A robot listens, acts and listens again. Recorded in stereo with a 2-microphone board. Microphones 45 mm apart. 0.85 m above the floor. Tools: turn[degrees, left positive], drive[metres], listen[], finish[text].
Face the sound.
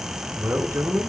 Thought: The man speaking: about 60° right or 120° right.
Action: turn[-60]
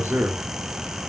Thought: So it is at 45° right.
Action: turn[-45]
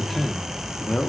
Thought: The man speaking is now 25° left.
Action: turn[25]
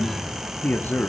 Thought: The man speaking is now 45° left.
Action: turn[45]
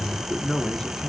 Thought: The man speaking is now 10° left.
Action: turn[10]
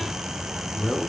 Action: finish[Found it: a man speaking, straight ahead.]